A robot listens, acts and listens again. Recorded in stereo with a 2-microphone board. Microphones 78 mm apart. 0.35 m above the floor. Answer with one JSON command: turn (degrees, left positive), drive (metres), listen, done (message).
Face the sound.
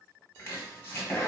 {"turn": 30}
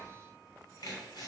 {"turn": 115}
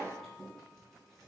{"done": "Facing the chopping."}